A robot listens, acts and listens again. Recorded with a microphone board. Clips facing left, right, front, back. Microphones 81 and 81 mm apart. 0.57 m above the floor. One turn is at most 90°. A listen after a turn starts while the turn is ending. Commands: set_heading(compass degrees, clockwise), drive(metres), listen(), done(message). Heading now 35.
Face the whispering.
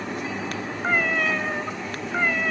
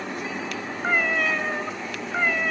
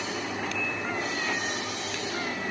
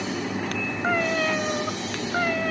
listen()
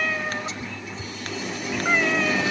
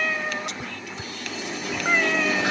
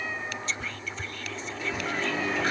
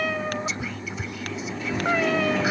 set_heading(125)
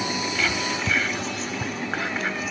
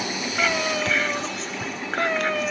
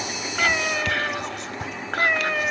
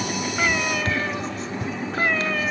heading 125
done("Facing the whispering.")